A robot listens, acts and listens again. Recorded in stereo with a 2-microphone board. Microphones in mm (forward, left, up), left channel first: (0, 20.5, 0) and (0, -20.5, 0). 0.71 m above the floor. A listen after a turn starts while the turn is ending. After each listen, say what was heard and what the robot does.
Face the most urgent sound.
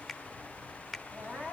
The crying: about 30° right or 150° right. Turn 30° right.
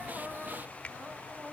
So it is at 120° right. Turn 120° right.
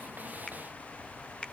Keep listening.
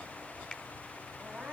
Found it: crying, straight ahead, over 4 m away.